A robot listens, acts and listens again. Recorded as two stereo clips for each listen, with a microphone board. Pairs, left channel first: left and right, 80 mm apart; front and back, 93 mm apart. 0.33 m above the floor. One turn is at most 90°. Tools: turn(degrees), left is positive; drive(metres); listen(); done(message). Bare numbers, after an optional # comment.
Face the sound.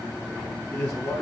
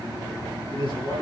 done("Facing the man speaking, over 4 m away.")